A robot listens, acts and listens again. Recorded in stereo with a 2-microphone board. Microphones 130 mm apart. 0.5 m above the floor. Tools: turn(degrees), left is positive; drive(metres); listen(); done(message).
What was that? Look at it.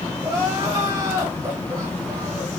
turn(degrees=-30)
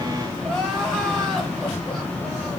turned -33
done("Found it: crying, straight ahead, 1 to 2 m away.")